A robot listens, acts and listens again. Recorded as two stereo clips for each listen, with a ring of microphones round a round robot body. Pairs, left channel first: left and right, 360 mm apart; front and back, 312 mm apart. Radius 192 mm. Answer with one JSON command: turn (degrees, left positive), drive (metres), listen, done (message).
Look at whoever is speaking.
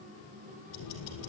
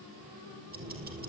{"listen": true}
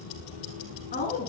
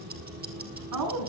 {"turn": 155}
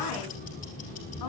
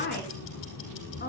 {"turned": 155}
{"listen": true}
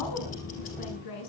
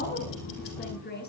{"turn": 60}
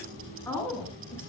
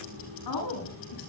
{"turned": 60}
{"done": "Facing the woman speaking."}